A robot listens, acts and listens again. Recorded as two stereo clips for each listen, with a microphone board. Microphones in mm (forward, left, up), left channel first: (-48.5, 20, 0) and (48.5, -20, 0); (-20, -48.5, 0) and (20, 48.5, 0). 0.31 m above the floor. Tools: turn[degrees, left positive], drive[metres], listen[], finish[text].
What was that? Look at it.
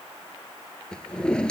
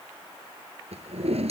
Thought: The drawer: 75° left.
Action: turn[75]
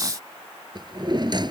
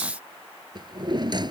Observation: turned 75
Thought: The drawer is now 25° left.
Action: turn[25]
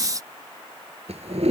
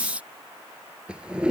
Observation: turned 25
Thought: The drawer is now 15° right.
Action: turn[-15]
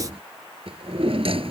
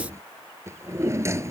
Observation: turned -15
Action: finish[Facing the drawer.]